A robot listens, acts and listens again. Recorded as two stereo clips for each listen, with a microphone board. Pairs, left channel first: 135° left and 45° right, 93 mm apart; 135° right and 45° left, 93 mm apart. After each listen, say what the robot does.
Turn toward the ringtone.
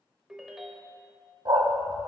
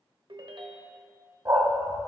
Turn 40° left.
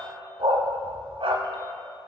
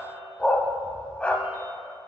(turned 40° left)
Keep listening.
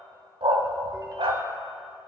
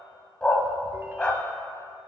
Keep listening.
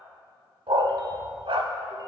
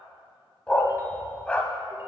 Facing where the ringtone came from. I can't hear it now.